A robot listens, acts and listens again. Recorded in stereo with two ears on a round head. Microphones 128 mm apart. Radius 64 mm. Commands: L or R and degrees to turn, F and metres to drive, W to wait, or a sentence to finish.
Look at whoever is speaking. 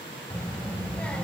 L30
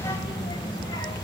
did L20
L150
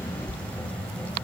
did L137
L10
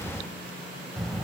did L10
Found it: a child speaking, straight ahead, 1 to 2 m away.